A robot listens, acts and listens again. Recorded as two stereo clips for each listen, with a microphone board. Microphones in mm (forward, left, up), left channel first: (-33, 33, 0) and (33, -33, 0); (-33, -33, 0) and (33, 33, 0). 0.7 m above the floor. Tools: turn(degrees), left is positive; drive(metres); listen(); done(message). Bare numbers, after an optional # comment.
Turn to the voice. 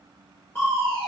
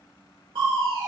listen()
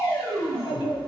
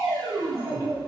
# The child speaking: 105° left.
turn(105)
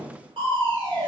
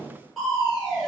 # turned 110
listen()
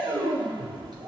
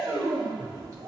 listen()
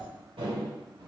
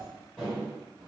done("Found it: a child speaking, straight ahead.")